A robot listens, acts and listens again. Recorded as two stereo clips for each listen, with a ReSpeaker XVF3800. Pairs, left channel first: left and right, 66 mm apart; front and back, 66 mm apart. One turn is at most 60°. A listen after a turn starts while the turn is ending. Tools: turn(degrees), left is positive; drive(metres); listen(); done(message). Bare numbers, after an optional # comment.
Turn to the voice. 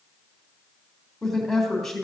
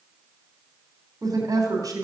# The woman speaking: 175° left.
turn(60)
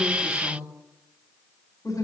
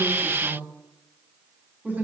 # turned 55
# The woman speaking is now 120° left.
turn(60)
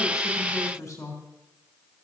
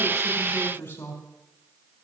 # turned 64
# The woman speaking is now 55° left.
turn(55)
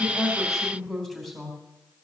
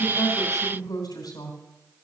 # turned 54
done("Facing the woman speaking, 2 to 4 m away.")